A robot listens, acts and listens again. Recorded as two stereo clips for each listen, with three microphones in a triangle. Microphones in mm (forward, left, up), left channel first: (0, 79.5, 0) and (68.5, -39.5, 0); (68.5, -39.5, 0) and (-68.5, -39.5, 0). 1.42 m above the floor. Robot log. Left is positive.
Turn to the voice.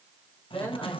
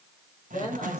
note: The man speaking: 45° left.
cmd yaw +45
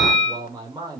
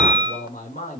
end: Found it: a man speaking, straight ahead.